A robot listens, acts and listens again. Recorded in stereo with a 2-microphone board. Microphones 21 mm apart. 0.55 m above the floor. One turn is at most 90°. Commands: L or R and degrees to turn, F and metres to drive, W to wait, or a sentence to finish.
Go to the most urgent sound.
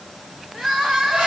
R40
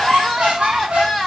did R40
F1.0
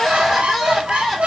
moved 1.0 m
F1.0
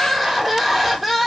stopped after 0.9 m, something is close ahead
Arrived at the crying, straight ahead.